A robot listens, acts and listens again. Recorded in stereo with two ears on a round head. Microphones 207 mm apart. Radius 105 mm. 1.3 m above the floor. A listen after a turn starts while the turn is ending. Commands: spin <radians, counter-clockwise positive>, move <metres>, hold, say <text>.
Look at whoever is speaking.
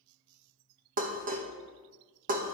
hold
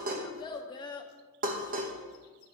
spin 0.35
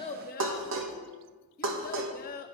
spin 2.44
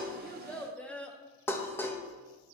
say Facing the child speaking.